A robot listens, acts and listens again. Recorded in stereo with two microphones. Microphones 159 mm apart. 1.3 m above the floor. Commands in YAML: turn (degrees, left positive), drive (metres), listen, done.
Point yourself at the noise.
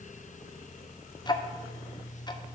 turn: 25
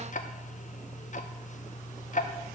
turn: 125
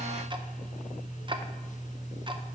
turn: -30
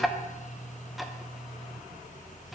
done: "Found it: ticking, straight ahead."